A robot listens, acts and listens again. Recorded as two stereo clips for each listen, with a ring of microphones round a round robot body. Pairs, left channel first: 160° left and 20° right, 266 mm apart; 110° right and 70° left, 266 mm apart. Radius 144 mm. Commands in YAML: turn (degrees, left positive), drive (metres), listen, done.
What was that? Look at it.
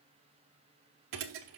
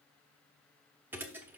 turn: -15
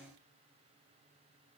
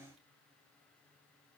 done: "Facing where the thud came from. I can't hear it now."